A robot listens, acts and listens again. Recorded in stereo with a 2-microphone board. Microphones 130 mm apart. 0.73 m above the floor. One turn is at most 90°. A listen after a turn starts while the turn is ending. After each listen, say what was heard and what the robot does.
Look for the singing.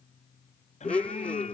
The singing: about 65° left or 115° left. Turn 65° left.
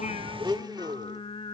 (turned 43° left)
So it is at 50° left. Turn 50° left.
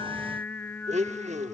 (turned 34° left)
The singing is now 15° left. Turn 15° left.
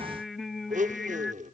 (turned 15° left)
Facing the singing.